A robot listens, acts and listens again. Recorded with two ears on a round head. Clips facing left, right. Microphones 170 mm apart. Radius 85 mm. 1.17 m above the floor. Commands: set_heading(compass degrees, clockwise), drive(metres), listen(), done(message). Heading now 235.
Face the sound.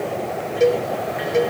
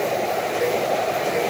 set_heading(190)
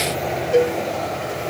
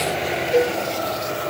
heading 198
set_heading(188)
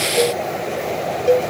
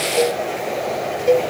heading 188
done("Facing the cowbell.")